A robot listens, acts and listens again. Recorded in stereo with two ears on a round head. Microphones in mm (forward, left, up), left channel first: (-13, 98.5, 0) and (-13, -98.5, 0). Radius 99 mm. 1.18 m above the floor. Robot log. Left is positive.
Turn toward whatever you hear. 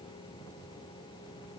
cmd idle
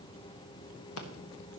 cmd yaw +90
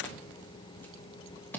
note: So it is at 10° left.
cmd yaw +10
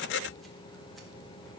cmd idle
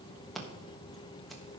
end: Found it: scissors, straight ahead, 1 to 2 m away.